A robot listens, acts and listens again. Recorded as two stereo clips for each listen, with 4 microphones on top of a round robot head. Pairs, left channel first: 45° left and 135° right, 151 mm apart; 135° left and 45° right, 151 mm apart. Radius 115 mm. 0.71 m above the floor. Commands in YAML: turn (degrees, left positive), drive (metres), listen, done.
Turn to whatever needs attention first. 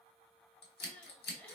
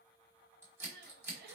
turn: -40
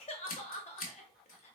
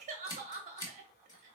done: "Facing the crying."